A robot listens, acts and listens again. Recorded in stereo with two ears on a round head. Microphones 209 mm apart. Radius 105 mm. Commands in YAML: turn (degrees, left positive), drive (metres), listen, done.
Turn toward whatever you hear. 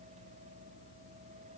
listen: true
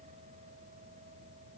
listen: true
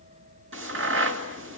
turn: -55
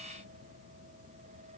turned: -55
listen: true
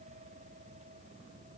done: "I heard a crack, but can't make it out now. It was about straight ahead or 70° right."